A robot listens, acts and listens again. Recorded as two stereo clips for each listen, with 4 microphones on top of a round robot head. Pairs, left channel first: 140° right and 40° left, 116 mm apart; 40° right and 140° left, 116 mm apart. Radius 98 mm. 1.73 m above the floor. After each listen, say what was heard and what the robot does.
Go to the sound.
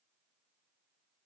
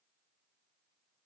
Keep listening.
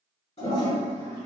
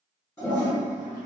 The toilet flushing: 105° right. Turn 105° right.
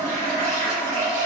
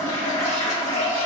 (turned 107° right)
Drive 1.0 m forward.
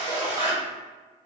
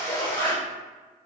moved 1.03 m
Drive 1.0 m forward.
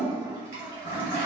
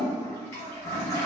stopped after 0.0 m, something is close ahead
I am next to the toilet flushing.